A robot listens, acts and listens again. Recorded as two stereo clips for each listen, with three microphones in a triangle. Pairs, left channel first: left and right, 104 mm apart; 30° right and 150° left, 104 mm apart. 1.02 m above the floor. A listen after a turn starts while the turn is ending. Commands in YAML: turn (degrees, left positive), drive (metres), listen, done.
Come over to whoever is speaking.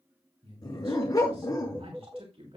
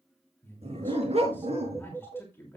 turn: -100
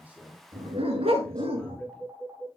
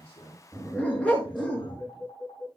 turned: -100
listen: true
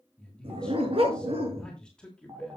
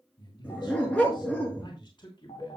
turn: 10
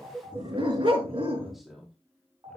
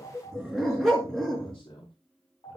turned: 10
drive: 1.0
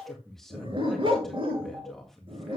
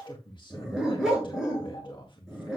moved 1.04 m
drive: 1.0
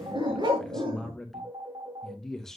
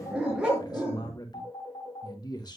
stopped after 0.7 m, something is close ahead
done: "Arrived at the man speaking, straight ahead."